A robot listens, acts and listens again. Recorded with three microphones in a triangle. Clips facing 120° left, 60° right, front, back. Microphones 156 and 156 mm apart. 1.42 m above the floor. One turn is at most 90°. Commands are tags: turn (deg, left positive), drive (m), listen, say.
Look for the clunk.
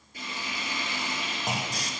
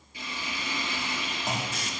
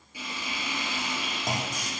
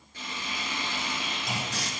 <turn deg="40"/>
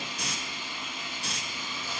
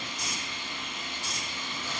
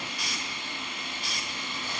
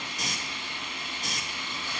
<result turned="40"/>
<say>I heard a clunk from this way, but can't make it out now.</say>